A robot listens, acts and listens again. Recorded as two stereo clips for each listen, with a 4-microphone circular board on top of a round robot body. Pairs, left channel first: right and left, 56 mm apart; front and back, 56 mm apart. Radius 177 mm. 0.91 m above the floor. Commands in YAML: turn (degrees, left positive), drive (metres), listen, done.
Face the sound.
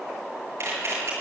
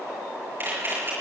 turn: 125
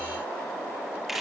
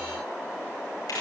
done: "Facing the camera shutter, over 4 m away."